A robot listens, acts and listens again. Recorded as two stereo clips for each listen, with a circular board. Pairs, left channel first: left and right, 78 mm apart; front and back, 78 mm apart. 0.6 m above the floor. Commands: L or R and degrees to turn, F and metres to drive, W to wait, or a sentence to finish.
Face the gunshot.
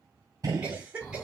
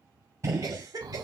R130
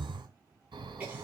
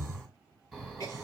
Facing where the gunshot came from. I can't hear it now.